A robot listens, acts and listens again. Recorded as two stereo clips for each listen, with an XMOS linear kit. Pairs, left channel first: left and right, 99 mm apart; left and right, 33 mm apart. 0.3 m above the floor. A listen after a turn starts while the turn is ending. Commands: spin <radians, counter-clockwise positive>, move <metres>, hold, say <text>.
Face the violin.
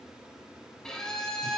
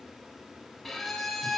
spin 0.52
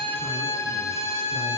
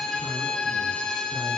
spin 2.53
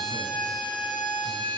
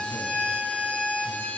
spin 1.13
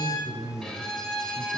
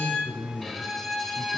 spin 0.17
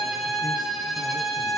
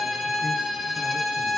say Facing the violin, 2 to 4 m away.